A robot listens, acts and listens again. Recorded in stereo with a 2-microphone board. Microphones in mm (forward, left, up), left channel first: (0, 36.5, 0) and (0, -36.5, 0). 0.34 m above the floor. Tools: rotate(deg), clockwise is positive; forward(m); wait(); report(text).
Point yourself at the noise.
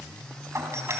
rotate(40)
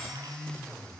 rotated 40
wait()
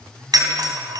rotate(95)
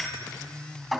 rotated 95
report("Found it: a doorbell, straight ahead.")